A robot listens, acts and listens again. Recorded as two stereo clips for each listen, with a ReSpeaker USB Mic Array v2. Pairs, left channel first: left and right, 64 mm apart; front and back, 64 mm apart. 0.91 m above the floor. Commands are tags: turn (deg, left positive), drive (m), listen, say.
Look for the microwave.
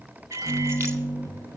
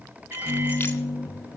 <turn deg="-120"/>
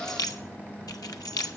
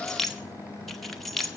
<turn deg="20"/>
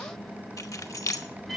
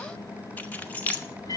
<say>Found it: a microwave, straight ahead.</say>